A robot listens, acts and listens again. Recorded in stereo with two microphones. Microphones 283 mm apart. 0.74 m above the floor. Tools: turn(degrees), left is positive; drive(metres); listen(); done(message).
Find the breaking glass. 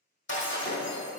turn(degrees=45)
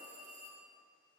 listen()
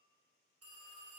done("I heard breaking glass, but can't make it out now. It was about straight ahead or 90° left.")